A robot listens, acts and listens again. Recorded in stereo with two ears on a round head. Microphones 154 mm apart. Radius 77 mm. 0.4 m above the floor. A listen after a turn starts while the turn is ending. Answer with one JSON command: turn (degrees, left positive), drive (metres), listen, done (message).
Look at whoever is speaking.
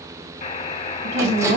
{"turn": -65}
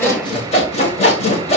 {"listen": true}
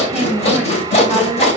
{"done": "Found it: a woman speaking, straight ahead."}